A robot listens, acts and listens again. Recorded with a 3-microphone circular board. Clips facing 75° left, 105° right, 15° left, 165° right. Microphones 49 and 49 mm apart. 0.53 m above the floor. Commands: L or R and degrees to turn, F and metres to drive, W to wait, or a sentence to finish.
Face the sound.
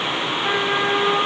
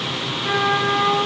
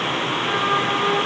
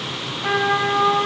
L140
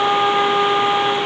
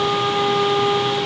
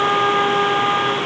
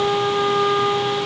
L20
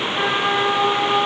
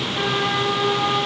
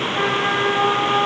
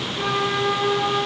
Found it: a trumpet, straight ahead, 1 to 2 m away.